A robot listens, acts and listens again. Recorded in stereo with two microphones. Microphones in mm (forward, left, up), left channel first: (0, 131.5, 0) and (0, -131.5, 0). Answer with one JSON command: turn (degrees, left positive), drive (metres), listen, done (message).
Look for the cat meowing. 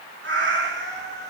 {"turn": -40}
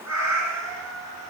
{"turn": -115}
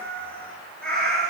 {"done": "Facing the cat meowing, 2 to 4 m away."}